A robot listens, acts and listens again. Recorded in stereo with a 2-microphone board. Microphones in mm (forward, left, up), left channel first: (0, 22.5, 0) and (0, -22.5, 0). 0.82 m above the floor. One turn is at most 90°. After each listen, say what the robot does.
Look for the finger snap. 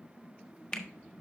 Turn 30° left.
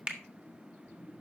Turn 20° right.
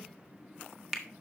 Facing the finger snap, 1 to 2 m away.